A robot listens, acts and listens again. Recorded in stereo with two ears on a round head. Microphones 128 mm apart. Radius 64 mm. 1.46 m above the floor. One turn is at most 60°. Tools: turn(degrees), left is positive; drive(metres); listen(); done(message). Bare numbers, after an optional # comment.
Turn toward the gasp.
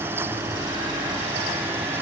listen()
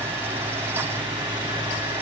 listen()
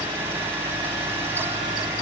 done("I can't make out a gasp to turn to.")